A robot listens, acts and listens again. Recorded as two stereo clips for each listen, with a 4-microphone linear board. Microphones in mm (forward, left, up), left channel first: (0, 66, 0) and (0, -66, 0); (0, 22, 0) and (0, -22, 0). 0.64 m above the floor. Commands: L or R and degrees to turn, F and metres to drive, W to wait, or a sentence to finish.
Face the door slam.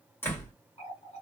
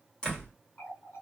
L15
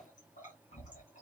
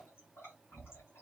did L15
W
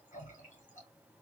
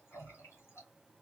I heard a door slam, but can't make it out now. It was about straight ahead or 150° left.